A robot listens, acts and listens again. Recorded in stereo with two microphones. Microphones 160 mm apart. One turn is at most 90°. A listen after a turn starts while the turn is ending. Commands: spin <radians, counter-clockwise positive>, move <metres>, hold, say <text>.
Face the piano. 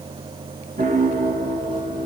spin -0.87
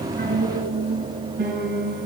spin -1.31
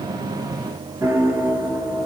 spin -0.26
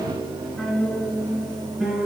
say Facing the piano.